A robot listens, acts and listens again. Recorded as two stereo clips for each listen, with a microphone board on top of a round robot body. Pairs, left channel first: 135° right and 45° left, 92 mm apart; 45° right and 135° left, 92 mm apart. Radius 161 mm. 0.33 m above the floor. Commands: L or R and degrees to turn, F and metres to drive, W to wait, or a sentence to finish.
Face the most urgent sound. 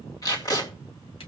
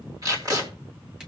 W
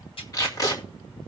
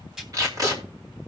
W
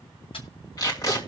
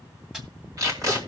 I can't make out anything urgent to turn to.